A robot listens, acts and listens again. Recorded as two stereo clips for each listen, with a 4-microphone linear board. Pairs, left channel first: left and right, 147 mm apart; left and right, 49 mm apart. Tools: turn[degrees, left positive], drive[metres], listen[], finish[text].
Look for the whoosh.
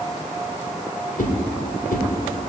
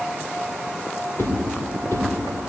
Action: turn[90]
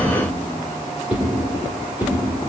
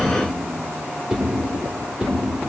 Thought: So it is at 10° right.
Action: turn[-10]
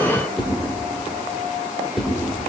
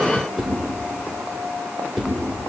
Action: finish[Found it: a whoosh, straight ahead, 2 to 4 m away.]